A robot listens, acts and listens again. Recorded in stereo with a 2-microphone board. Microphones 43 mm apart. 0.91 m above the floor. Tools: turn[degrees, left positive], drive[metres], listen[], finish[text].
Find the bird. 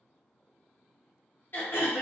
Action: listen[]
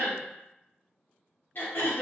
Action: listen[]
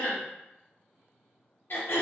Action: finish[I can't make out a bird to turn to.]